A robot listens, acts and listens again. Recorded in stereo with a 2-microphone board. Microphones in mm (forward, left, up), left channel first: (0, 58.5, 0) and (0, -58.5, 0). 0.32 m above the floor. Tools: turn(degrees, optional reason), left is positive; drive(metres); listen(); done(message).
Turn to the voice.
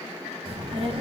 turn(degrees=-50, reason="The child speaking: about 50° right or 130° right.")
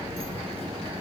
turn(degrees=-60, reason="So it is at 60° right.")
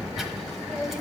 done("Facing the child speaking.")